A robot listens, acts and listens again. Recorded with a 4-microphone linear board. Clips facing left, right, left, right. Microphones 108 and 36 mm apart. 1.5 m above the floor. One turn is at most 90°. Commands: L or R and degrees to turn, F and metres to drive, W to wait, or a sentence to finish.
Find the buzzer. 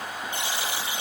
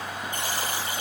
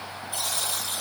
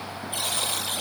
R45
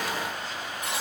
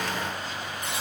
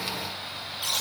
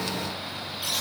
Found it: a buzzer, straight ahead, over 4 m away.